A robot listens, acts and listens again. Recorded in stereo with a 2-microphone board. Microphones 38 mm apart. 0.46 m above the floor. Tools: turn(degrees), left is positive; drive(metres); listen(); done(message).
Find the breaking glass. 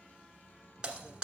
turn(degrees=-20)
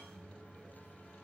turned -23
listen()
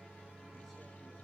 done("I heard breaking glass, but can't make it out now. It was about straight ahead or 135° right.")